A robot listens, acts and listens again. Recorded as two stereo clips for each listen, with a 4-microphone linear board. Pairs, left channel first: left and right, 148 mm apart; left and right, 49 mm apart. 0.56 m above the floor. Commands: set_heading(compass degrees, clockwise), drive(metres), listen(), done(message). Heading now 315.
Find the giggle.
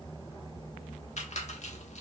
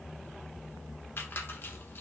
listen()
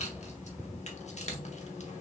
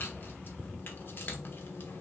listen()
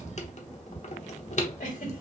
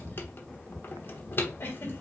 set_heading(255)
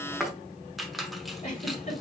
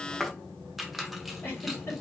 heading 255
set_heading(205)
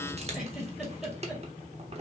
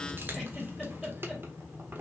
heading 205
done("Found it: a giggle, straight ahead.")